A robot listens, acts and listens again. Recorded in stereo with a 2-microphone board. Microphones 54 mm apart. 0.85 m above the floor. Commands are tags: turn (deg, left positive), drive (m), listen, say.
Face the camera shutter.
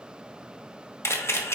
<turn deg="55"/>
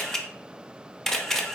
<turn deg="10"/>
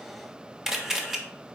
<say>Facing the camera shutter.</say>